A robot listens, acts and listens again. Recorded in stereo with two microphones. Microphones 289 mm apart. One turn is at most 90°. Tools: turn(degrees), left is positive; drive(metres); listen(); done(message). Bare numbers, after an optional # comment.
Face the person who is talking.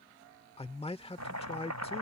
# The man speaking: about 20° left or 160° left.
turn(20)
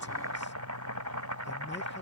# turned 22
listen()
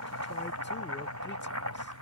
listen()
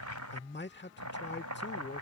# So it is at 135° left.
turn(90)
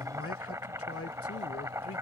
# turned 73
# The man speaking is now 60° left.
turn(60)
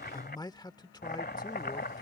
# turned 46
# The man speaking is now 15° left.
turn(15)
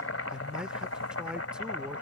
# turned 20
done("Facing the man speaking.")